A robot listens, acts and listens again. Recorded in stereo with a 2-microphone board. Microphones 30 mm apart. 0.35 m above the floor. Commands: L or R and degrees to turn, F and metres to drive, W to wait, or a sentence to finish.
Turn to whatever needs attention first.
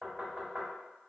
W
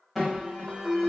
L30
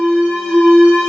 L140
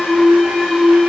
Facing the alarm, 1 to 2 m away.